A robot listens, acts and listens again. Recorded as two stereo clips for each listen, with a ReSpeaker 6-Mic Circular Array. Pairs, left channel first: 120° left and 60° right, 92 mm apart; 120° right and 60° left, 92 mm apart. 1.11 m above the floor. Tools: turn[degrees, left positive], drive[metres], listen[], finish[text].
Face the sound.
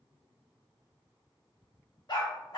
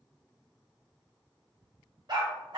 Thought: The dog barking: 90° left.
Action: turn[90]
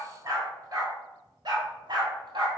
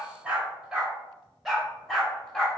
Thought: The dog barking is now 40° right.
Action: turn[-40]
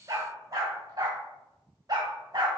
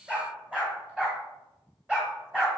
Thought: The dog barking is now 20° right.
Action: turn[-20]
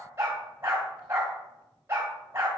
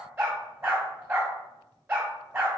Action: finish[Facing the dog barking.]